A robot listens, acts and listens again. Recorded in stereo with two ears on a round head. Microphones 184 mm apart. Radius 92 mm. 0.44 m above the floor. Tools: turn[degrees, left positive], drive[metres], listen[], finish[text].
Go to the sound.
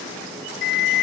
Thought: The alarm: about 55° left or 125° left.
Action: turn[55]
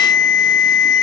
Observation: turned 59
Thought: So it is at 65° left.
Action: turn[65]
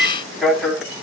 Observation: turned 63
Action: drive[1.0]
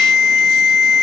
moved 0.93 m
Action: drive[1.0]
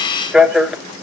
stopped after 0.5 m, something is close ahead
Action: finish[Arrived at the alarm, straight ahead.]